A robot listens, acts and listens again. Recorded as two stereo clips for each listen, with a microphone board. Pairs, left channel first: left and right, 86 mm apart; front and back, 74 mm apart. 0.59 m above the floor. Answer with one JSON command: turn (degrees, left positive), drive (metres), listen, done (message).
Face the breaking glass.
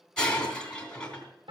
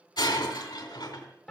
{"turn": 10}
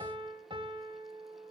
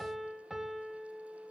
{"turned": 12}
{"done": "Facing where the breaking glass came from. I can't hear it now."}